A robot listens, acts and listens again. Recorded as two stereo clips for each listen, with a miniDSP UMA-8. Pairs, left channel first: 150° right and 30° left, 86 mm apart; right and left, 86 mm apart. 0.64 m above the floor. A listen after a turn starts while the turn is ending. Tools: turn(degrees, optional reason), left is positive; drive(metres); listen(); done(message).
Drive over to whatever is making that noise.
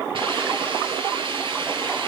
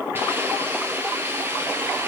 turn(degrees=25, reason="The hiss: 25° left.")
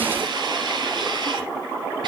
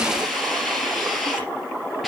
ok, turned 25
drive(metres=1.0)
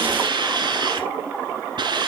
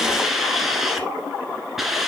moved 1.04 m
drive(metres=1.0)
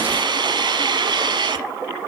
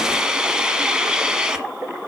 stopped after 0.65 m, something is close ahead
turn(degrees=10, reason="The hiss is now 10° left.")
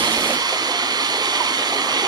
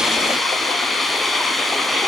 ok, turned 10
done("I am next to the hiss.")